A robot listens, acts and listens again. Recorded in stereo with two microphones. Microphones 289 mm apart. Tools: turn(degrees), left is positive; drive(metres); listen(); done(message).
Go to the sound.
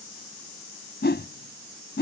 turn(degrees=35)
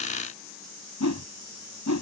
turn(degrees=105)
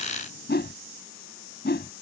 turn(degrees=35)
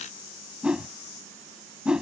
drive(metres=1.0)
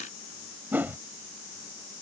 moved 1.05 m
drive(metres=1.0)
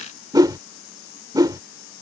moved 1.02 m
turn(degrees=-15)
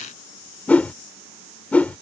drive(metres=1.0)
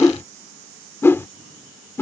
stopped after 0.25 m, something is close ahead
turn(degrees=10)
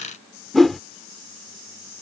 done("Arrived at the whoosh, straight ahead.")